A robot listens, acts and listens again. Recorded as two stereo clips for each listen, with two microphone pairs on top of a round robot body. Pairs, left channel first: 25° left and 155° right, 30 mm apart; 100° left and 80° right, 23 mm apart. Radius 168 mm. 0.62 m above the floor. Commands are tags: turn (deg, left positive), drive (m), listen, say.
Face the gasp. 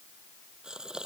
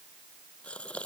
<turn deg="135"/>
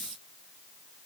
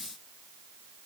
<say>Facing where the gasp came from. I can't hear it now.</say>